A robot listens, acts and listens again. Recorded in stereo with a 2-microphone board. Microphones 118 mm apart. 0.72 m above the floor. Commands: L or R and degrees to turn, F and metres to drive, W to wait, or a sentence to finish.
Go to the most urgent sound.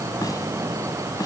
W
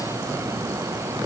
W
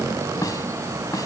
I can't make out anything urgent, only a snare drum.